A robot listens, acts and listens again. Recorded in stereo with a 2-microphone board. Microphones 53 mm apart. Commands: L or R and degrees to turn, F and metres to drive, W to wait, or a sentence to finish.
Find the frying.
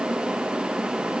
W
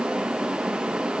W
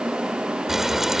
R30
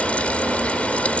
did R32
L25
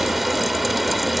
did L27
Facing the frying.